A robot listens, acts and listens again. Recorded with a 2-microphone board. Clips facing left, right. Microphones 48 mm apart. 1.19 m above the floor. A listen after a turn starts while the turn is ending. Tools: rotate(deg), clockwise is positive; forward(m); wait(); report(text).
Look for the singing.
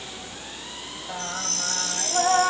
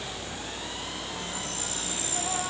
rotate(-55)
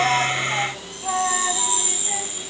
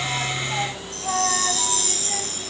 report("Found it: singing, straight ahead.")